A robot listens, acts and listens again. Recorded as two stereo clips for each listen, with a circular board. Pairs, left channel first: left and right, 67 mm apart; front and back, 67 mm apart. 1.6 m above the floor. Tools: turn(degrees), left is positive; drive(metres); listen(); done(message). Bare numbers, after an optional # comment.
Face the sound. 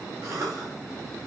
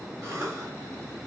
# The cough: 130° right.
turn(-130)
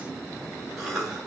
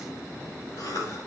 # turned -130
done("Facing the cough.")